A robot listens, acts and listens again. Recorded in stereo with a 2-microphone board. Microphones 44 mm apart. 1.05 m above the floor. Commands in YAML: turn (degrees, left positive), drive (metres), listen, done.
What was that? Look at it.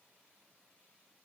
listen: true
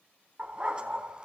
turn: -20
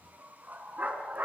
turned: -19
turn: -40
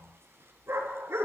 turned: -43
turn: -105
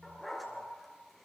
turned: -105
done: "Facing the dog barking, over 4 m away."